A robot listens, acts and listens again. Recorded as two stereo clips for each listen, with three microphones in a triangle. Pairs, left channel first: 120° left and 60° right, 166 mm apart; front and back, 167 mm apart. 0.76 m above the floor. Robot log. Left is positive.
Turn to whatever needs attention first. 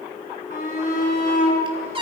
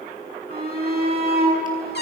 note: The shout: 155° left.
cmd yaw +155
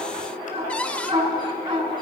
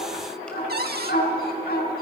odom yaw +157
end: Facing the shout.